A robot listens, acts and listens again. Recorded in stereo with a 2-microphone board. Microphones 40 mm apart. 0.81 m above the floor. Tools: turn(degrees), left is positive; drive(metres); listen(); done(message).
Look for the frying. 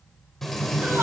turn(degrees=30)
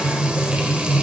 turn(degrees=-20)
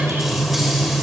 done("Facing the frying.")